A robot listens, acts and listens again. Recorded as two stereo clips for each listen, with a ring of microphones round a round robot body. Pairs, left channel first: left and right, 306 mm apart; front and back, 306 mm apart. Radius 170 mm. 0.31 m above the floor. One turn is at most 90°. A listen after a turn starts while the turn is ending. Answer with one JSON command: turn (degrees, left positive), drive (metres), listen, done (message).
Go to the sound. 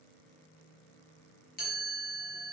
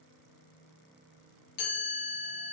{"turn": 25}
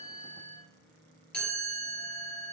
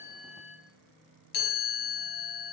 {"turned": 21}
{"drive": 1.0}
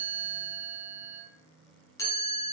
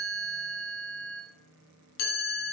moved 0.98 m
{"turn": 10}
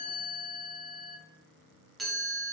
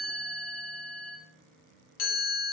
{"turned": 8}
{"drive": 1.0}
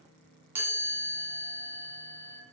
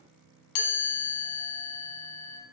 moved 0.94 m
{"drive": 1.0}
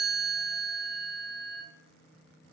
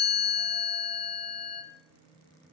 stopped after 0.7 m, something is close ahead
{"done": "I am next to the chime."}